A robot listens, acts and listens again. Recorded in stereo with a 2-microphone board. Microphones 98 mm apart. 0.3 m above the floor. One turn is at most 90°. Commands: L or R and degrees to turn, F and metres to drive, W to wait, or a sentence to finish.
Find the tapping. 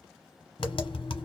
L65
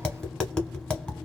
L10
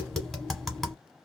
Found it: tapping, straight ahead, 1 to 2 m away.